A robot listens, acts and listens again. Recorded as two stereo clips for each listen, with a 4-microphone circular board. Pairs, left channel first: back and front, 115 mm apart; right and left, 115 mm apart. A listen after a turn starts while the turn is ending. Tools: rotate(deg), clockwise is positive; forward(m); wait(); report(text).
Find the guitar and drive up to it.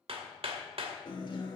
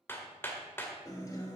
rotate(145)
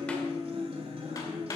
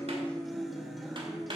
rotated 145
forward(1.0)
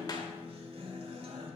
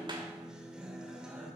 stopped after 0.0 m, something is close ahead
report("Something is in my way. I am facing the guitar but have not reached it.")